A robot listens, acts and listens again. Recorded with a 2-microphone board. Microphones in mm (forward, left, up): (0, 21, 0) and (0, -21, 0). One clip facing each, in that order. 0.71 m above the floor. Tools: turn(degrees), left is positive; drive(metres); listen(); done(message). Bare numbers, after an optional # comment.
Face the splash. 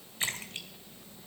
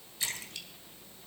# The splash: about 40° left or 140° left.
turn(40)
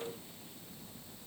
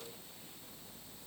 listen()
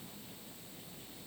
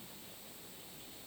done("I heard a splash, but can't make it out now. It was about straight ahead or 100° left.")